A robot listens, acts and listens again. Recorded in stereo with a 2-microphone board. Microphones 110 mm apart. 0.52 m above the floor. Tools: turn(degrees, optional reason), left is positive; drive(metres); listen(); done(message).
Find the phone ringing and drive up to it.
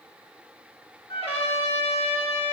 listen()
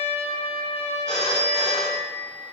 turn(degrees=30)
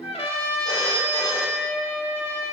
turn(degrees=140, reason="So it is at 140° left.")
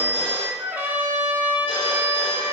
turn(degrees=45, reason="The phone ringing is now 45° left.")
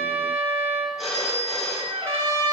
drive(metres=1.0)
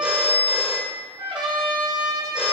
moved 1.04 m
turn(degrees=-10, reason="The phone ringing is now 10° right.")
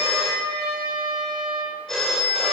drive(metres=1.0)
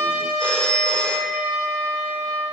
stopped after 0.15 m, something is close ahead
turn(degrees=10, reason="The phone ringing is now 10° left.")
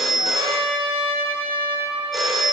done("I am next to the phone ringing.")